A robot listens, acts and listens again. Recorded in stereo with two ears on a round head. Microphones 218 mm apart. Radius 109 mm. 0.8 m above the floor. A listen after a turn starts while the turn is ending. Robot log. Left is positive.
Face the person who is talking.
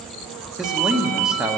cmd yaw +30
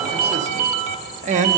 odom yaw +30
note: So it is at 30° right.
cmd yaw -30
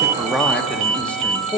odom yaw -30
end: Facing the man speaking, under 1 m away.